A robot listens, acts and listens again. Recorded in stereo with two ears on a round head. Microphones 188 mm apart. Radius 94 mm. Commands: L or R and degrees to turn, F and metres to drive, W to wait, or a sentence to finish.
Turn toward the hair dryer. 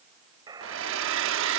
R65
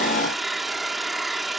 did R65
Found it: a hair dryer, straight ahead.